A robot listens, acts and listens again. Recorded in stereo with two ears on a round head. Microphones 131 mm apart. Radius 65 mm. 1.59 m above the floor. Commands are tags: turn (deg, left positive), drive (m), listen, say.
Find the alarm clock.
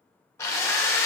<listen/>
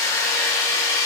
<listen/>
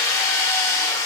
<say>I can't make out an alarm clock to turn to.</say>